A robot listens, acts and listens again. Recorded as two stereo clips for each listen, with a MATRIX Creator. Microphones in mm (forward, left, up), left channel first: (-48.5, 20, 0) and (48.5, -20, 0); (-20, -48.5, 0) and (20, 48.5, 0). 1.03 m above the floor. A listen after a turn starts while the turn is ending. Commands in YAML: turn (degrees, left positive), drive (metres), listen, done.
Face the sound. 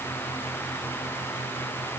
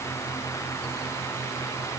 listen: true
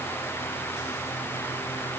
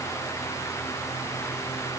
listen: true
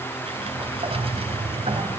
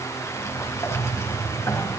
turn: -50
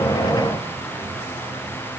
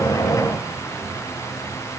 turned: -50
listen: true
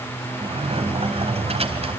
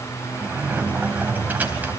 done: "Found it: a sliding door, straight ahead."